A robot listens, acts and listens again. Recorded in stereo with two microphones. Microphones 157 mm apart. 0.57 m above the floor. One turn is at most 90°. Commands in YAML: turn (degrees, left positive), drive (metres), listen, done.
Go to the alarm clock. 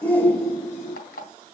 turn: 90
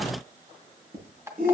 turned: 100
turn: -20
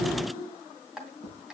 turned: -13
drive: 1.0
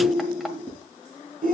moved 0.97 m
listen: true
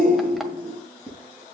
listen: true
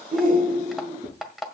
drive: 1.0
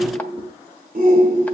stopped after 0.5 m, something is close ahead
listen: true
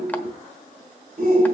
listen: true
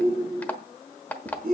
turn: 10
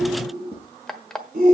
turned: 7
done: "Arrived at the alarm clock, straight ahead."